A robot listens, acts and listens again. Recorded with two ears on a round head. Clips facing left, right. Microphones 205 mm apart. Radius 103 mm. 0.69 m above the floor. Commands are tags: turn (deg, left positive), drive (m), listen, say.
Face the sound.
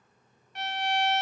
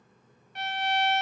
<turn deg="75"/>
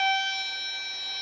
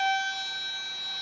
<turn deg="15"/>
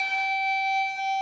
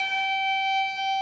<say>Facing the violin.</say>